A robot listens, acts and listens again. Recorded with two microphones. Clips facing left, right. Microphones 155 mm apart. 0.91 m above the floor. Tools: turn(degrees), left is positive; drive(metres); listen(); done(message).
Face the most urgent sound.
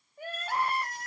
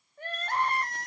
turn(degrees=30)
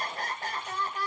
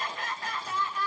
turn(degrees=140)
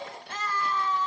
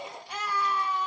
turn(degrees=-10)
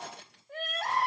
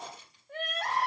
done("Found it: crying, straight ahead.")